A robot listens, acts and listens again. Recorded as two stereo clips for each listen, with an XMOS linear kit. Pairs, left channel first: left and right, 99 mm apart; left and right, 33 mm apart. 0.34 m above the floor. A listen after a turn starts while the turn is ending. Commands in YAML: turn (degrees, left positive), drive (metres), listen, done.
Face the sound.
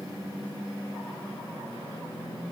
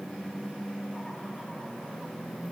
listen: true
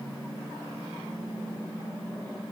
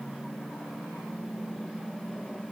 listen: true
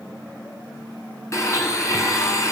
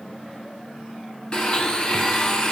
turn: 30
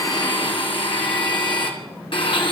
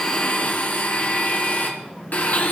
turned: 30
turn: 120
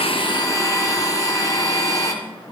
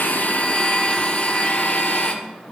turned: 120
turn: 40
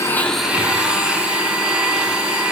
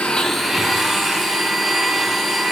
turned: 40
turn: -10
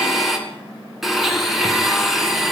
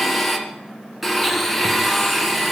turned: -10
done: "Facing the blender, 2 to 4 m away."